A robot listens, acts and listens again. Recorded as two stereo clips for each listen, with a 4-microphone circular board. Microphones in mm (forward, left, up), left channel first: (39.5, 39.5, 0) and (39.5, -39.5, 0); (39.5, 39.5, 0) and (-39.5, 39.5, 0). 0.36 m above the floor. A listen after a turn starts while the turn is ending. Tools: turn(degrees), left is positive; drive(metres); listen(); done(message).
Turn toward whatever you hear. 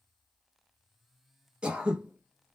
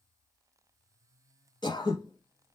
turn(degrees=-15)
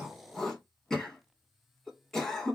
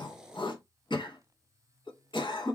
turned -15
done("Facing the throat clearing, under 1 m away.")